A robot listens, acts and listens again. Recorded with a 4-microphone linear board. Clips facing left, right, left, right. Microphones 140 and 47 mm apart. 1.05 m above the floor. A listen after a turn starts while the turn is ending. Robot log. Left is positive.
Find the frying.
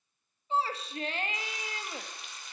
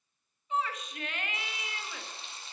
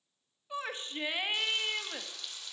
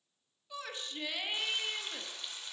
note: The frying: about 30° right or 150° right.
cmd yaw -30
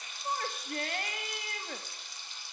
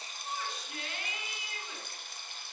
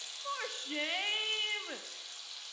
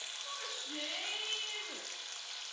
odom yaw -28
note: So it is at 120° right.
cmd yaw -120
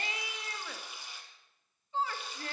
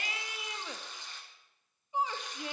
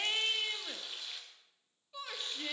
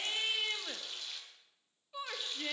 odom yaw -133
note: The frying is now 10° left.
cmd yaw +10
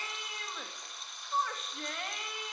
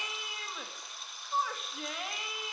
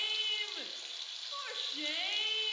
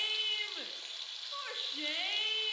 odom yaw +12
end: Found it: frying, straight ahead, 1 to 2 m away.